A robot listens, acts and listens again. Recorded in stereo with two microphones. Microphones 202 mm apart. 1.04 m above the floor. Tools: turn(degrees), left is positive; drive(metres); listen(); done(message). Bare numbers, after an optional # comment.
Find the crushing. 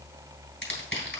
# The crushing: about 70° left or 110° left.
turn(70)
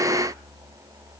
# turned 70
listen()
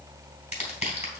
# So it is at 35° left.
turn(35)
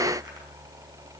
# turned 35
listen()
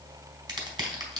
# The crushing is now 20° right.
turn(-20)
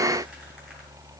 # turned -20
listen()
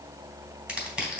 done("Facing the crushing, 2 to 4 m away.")